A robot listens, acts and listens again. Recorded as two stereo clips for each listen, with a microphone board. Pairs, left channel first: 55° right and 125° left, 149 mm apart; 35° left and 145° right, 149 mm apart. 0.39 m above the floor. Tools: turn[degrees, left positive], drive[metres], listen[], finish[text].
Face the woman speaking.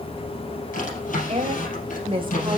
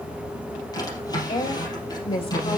Thought: The woman speaking: 75° left.
Action: turn[75]
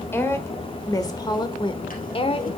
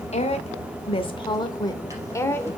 Thought: The woman speaking is now 30° right.
Action: turn[-30]
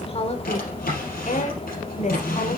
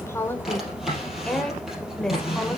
Thought: The woman speaking is now 50° right.
Action: turn[-50]
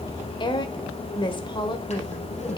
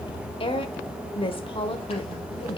Thought: The woman speaking is now 10° right.
Action: turn[-10]
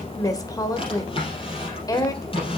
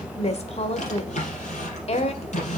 Action: finish[Facing the woman speaking, 1 to 2 m away.]